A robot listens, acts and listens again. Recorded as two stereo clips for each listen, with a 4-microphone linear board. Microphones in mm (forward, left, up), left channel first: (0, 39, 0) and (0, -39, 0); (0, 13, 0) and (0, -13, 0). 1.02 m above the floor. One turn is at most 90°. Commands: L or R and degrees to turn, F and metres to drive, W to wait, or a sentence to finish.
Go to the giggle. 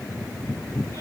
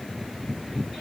W
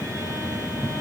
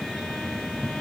W
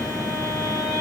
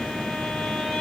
I can't make out a giggle, only a violin.